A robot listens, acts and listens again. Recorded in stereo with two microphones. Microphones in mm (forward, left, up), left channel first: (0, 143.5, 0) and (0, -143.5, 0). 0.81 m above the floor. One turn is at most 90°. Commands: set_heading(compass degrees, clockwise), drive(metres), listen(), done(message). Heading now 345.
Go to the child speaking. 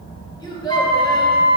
set_heading(315)
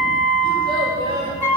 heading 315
set_heading(330)
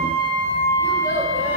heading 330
listen()
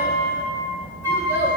listen()
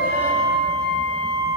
done("Facing where the child speaking came from. I can't hear it now. I did not reach it.")